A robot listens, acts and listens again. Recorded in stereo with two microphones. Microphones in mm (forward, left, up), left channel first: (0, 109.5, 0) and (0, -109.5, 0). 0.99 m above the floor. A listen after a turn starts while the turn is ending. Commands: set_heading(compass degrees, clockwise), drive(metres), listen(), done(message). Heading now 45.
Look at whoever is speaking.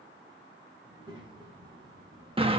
set_heading(65)
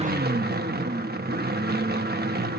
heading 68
listen()
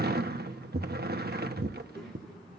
done("Facing the child speaking.")